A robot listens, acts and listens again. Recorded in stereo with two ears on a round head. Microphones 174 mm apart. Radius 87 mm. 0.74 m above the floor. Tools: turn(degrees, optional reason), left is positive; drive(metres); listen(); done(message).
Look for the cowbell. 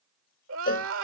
turn(degrees=45, reason="The cowbell: about 45° left or 135° left.")
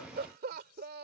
listen()
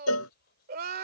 turn(degrees=85, reason="So it is at 85° left.")
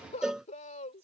done("Facing the cowbell.")